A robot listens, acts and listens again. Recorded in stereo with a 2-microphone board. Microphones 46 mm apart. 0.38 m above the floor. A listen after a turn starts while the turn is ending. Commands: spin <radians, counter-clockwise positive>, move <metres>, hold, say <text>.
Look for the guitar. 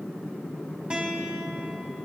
spin -0.44
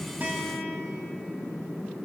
hold
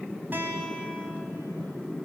spin -2.27
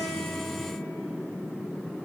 hold
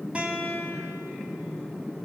spin -0.52
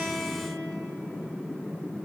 hold
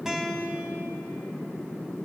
spin -0.17
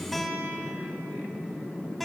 say Facing the guitar.